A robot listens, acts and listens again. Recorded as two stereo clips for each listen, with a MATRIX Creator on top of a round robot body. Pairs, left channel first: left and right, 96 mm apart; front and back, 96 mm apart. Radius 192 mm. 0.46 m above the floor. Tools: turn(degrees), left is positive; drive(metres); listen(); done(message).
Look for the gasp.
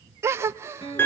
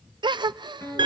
turn(degrees=-150)
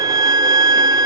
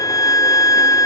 done("I heard a gasp from this way, but can't make it out now.")